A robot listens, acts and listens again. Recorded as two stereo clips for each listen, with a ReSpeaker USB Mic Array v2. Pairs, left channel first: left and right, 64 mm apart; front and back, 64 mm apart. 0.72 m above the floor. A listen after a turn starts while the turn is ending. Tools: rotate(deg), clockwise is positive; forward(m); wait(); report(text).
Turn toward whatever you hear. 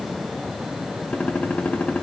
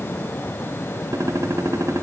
rotate(-155)
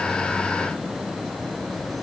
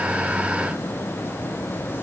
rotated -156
report("I heard a gunshot from this way, but can't make it out now.")